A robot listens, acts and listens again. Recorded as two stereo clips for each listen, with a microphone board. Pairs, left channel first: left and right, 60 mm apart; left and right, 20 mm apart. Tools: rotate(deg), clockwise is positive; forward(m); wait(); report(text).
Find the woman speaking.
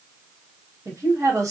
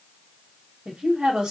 rotate(65)
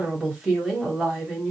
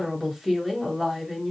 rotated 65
report("Found it: a woman speaking, straight ahead.")